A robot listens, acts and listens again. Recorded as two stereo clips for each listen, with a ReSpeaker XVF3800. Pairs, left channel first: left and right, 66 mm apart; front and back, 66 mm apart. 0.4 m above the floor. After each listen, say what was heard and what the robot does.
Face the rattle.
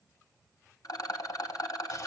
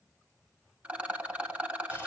The rattle: 110° left. Turn 110° left.
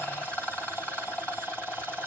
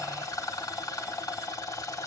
The rattle is now 20° left. Turn 20° left.
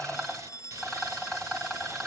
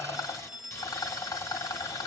Found it: a rattle, straight ahead, 1 to 2 m away.